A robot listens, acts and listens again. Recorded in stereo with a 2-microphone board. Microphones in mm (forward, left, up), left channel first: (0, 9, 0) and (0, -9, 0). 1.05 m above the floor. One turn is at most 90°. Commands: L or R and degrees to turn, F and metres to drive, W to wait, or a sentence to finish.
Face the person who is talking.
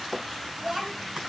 R30
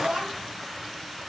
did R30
R90
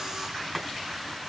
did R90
R30
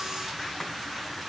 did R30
W
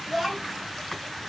R10
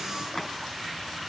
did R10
W
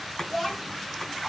Facing the child speaking, over 4 m away.